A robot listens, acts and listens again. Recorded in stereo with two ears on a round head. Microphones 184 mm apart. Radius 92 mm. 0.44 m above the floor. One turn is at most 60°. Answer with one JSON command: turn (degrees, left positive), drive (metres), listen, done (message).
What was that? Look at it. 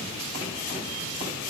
{"listen": true}
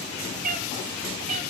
{"turn": -40}
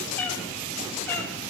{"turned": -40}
{"turn": 10}
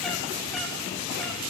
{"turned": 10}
{"listen": true}
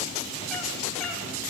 {"listen": true}
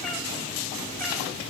{"done": "Facing where the cat meowing came from. I can't hear it now."}